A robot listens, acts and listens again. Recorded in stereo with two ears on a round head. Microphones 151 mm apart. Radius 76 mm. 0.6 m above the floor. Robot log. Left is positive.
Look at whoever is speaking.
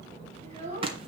note: The child speaking: about 40° right or 140° right.
cmd yaw -40
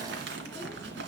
cmd idle
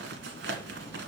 cmd idle
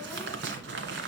end: I heard a child speaking, but can't make it out now. It was about straight ahead or 100° right.